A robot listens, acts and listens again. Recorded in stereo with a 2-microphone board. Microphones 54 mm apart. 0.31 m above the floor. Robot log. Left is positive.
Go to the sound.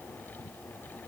cmd idle
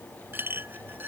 note: The clink: about 40° right or 140° right.
cmd yaw -40
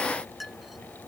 cmd fwd 1.0
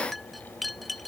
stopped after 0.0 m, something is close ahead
end: Something is in my way. I am facing the clink but have not reached it.